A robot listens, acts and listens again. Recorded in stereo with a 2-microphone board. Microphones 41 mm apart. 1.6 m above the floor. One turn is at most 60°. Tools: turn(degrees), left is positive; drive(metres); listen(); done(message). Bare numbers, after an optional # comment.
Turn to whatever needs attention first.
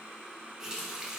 listen()
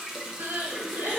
# The crying: about 70° right or 110° right.
turn(-60)
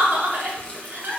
# So it is at 50° right.
turn(-50)
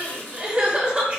# The crying is now 25° right.
turn(-25)
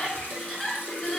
# The crying is now 15° left.
turn(15)
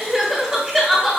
done("Facing the crying.")